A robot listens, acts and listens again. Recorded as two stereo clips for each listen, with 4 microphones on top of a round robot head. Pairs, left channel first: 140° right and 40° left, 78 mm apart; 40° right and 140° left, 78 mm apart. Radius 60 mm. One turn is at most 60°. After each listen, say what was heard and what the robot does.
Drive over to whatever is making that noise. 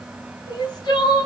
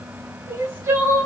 The crying: 165° right. Turn 60° right.
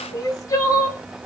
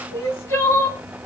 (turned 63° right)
The crying is now 100° right. Turn 60° right.
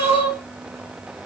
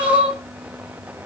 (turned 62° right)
The crying is now 40° right. Turn 40° right.
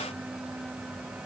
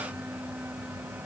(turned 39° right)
Keep listening.
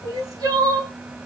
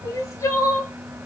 Drive 1.0 m forward.
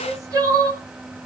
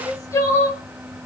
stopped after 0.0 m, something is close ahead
Something is in my way. I am facing the crying but have not reached it.